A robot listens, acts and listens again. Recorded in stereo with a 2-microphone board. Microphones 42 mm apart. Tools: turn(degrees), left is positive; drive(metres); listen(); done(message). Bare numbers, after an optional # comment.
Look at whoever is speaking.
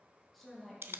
turn(30)
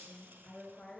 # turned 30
# So it is at 150° left.
turn(150)
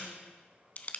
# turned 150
listen()
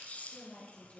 # The woman speaking is now 40° left.
turn(40)
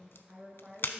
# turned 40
# The woman speaking is now 15° right.
turn(-15)
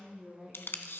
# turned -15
done("Facing the woman speaking, over 4 m away.")